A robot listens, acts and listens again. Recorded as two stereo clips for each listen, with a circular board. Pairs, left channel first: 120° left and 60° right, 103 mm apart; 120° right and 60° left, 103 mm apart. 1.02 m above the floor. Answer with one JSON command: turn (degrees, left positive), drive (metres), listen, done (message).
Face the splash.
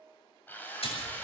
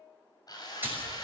{"turn": 130}
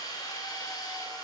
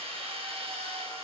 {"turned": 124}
{"done": "I heard a splash from this way, but can't make it out now."}